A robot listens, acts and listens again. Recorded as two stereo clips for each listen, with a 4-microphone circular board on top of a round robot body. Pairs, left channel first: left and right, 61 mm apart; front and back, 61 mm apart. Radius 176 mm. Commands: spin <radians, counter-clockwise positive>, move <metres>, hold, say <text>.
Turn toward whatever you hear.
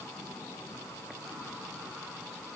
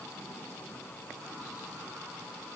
hold
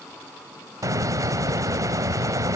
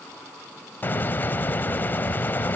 spin -1.05
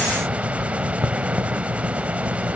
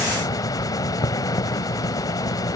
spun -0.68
spin -0.35
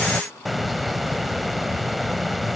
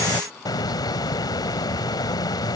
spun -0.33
say Found it: a hiss, straight ahead.